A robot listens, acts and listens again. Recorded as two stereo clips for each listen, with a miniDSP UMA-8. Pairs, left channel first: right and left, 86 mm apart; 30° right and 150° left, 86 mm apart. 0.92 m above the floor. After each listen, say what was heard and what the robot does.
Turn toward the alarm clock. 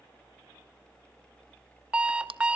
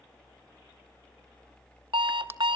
The alarm clock: 170° left. Turn 170° left.
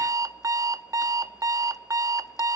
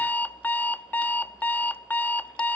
The alarm clock is now 40° left. Turn 40° left.
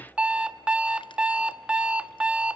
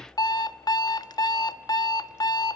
The alarm clock is now 10° left. Turn 10° left.
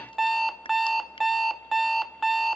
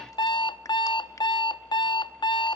Facing the alarm clock, under 1 m away.